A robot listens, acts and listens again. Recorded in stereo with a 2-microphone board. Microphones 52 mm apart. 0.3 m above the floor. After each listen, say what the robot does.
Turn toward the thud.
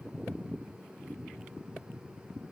Keep listening.
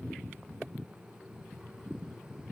Keep listening.
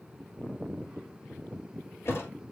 Turn 50° left.
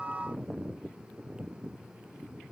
Keep listening.
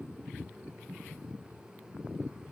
I heard a thud, but can't make it out now. It was about straight ahead or 80° left.